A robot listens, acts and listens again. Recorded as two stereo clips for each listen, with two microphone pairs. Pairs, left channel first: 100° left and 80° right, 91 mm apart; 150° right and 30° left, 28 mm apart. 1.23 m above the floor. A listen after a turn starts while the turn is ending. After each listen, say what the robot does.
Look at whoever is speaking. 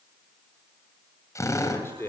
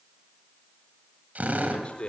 Turn 165° left.
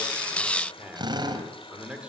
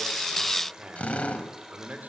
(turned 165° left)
Found it: a man speaking, straight ahead, over 4 m away.